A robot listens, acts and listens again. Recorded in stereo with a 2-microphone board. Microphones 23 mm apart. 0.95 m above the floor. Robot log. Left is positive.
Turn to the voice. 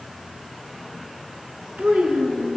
cmd yaw -90
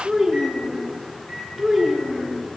end: Facing the child speaking, over 4 m away.